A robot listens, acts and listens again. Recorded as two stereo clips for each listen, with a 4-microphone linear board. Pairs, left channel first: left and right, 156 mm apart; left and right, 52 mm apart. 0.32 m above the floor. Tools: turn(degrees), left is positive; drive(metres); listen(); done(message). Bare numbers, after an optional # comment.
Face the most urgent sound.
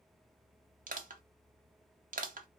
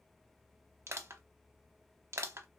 listen()
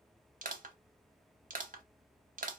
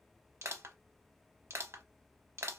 listen()
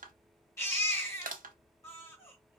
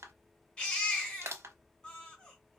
# The baby crying: about 20° left or 160° left.
turn(20)
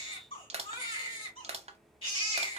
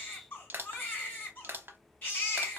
# So it is at 140° left.
turn(140)
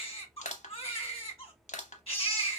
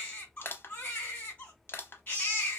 # The baby crying is now 40° left.
turn(40)
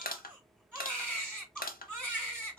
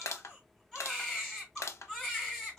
done("Facing the baby crying, 2 to 4 m away.")